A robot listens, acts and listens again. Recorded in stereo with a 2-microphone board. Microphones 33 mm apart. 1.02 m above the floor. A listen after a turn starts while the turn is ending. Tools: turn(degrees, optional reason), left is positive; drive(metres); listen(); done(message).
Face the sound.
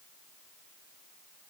listen()
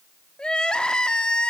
turn(degrees=30, reason="The crying: about 30° left or 150° left.")
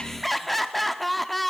done("Found it: crying, straight ahead, under 1 m away.")